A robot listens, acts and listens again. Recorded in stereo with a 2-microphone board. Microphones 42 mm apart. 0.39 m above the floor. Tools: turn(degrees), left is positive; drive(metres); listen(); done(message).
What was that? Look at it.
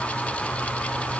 listen()
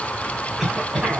turn(degrees=-30)
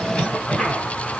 turn(degrees=20)
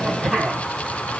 done("Found it: a cough, straight ahead, 2 to 4 m away.")